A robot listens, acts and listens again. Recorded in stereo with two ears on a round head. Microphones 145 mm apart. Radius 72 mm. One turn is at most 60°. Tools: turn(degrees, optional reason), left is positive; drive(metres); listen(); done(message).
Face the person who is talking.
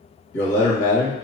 turn(degrees=60)
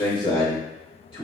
turn(degrees=30, reason="So it is at 30° left.")
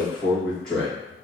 done("Facing the man speaking, 1 to 2 m away.")